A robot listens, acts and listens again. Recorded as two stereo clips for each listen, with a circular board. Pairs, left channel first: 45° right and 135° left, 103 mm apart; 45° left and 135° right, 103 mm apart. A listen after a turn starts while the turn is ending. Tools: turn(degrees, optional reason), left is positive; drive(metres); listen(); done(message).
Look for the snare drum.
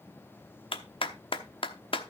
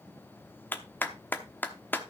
listen()
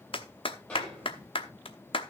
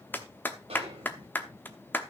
turn(degrees=-125, reason="The snare drum: 125° right.")
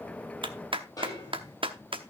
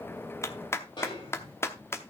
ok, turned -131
turn(degrees=10, reason="The snare drum is now 10° left.")
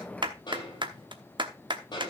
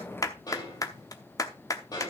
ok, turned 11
done("Found it: a snare drum, straight ahead, over 4 m away.")